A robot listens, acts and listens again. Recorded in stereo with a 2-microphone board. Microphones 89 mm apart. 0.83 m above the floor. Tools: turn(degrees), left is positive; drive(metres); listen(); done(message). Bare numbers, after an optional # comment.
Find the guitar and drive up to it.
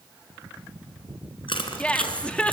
listen()
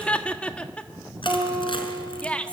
# The guitar: about 25° right or 155° right.
turn(-25)
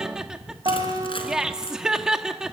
# So it is at 130° right.
turn(-130)
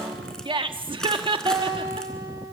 # The guitar is now 50° right.
turn(-50)
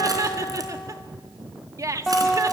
drive(1.0)
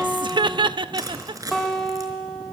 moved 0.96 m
drive(1.0)
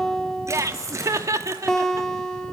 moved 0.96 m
drive(1.0)
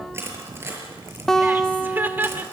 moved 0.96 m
drive(1.0)
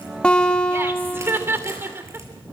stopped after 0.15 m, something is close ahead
# The guitar is now 15° left.
turn(15)
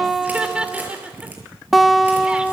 done("I am next to the guitar.")